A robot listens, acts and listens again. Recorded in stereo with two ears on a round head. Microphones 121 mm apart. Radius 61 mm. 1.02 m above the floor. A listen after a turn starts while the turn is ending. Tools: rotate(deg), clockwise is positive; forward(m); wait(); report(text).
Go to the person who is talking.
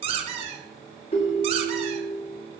wait()
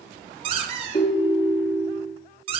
wait()
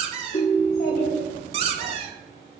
rotate(-90)
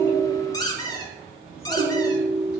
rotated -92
forward(1.0)
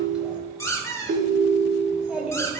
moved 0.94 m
forward(1.0)
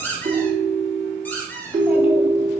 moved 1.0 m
wait()
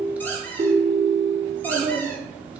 rotate(10)
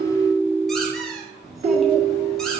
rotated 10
forward(1.0)
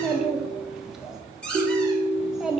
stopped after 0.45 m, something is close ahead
report("Arrived at the child speaking, straight ahead.")